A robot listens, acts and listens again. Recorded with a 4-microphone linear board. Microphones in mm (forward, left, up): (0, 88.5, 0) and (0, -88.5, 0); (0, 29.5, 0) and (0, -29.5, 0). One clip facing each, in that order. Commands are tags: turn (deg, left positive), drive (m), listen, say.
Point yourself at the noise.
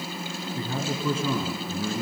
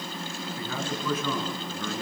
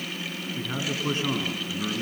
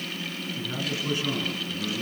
<turn deg="30"/>
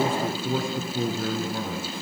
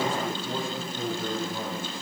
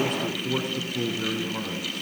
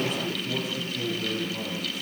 <turn deg="120"/>
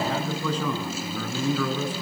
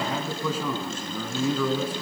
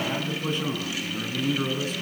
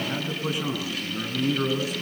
<say>Facing the man speaking.</say>